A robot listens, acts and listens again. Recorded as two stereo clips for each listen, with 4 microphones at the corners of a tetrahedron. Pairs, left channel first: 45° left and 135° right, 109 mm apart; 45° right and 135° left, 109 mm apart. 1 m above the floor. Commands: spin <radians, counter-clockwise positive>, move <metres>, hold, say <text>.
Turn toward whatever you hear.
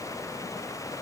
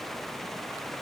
hold
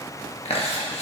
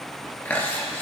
spin 0.52
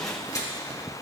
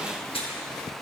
spin -0.26
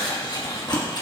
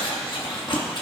say Facing the chewing, 1 to 2 m away.